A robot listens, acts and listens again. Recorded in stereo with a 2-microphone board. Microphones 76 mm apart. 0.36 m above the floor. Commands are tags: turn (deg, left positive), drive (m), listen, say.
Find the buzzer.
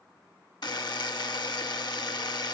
<turn deg="70"/>
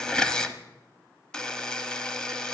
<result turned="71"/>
<turn deg="10"/>
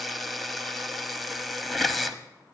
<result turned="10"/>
<say>Found it: a buzzer, straight ahead, under 1 m away.</say>